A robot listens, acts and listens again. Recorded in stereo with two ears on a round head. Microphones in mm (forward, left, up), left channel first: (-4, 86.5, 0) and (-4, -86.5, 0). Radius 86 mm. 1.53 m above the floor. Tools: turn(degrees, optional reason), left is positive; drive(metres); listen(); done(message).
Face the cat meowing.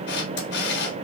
listen()
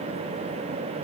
listen()
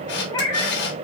turn(degrees=20, reason="The cat meowing: about 20° left or 160° left.")
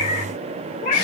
turn(degrees=140, reason="So it is at 140° left.")
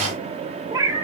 turn(degrees=-20, reason="The cat meowing is now 20° right.")
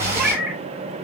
done("Found it: a cat meowing, straight ahead.")